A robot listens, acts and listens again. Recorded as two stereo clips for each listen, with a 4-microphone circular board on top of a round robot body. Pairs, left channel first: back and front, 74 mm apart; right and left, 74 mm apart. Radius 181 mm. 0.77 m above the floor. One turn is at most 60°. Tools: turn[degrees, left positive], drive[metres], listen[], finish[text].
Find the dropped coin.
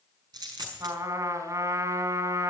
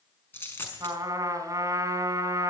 Thought: The dropped coin: 30° right.
Action: turn[-30]
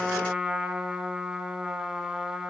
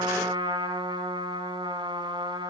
Action: finish[I heard a dropped coin from this way, but can't make it out now.]